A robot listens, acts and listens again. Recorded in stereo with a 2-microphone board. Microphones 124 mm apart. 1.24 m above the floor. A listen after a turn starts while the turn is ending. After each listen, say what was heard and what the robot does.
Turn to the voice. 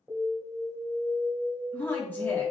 The woman speaking: about 15° left or 165° left. Turn 15° left.
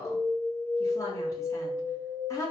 So it is at 150° left. Turn 150° left.
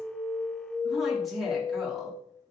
Found it: a woman speaking, straight ahead.